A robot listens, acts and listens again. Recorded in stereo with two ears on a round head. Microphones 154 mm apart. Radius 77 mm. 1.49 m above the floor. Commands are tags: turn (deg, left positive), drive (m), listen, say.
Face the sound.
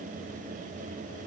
<listen/>
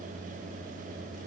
<listen/>
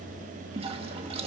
<turn deg="-35"/>
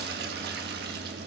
<turn deg="-105"/>
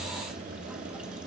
<listen/>
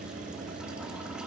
<listen/>
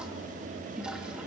<say>Found it: a toilet flushing, straight ahead, 1 to 2 m away.</say>